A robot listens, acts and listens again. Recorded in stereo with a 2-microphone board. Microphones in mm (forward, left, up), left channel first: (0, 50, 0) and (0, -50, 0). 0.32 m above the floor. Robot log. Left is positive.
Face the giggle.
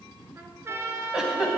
cmd yaw -30
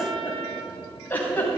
note: So it is at 25° left.
cmd yaw +25
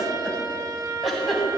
end: Facing the giggle.